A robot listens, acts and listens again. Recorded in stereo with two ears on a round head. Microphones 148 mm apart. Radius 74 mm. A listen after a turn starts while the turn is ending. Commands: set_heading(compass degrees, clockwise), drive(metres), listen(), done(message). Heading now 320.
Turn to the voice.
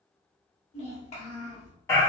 set_heading(280)
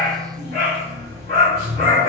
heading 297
listen()
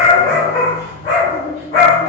listen()
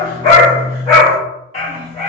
done("I heard a child speaking, but can't make it out now. It was about 20° left or 115° left.")